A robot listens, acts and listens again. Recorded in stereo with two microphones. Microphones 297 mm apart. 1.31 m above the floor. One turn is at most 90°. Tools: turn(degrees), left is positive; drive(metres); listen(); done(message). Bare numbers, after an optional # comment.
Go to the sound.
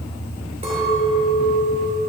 # The clink: about 25° right or 155° right.
turn(-25)
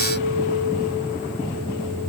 # So it is at 130° right.
turn(-90)
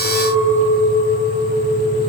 # The clink is now 25° right.
turn(-25)
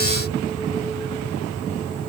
listen()
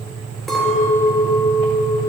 drive(1.0)
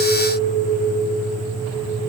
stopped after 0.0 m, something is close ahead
done("Something is in my way. I am facing the clink but have not reached it.")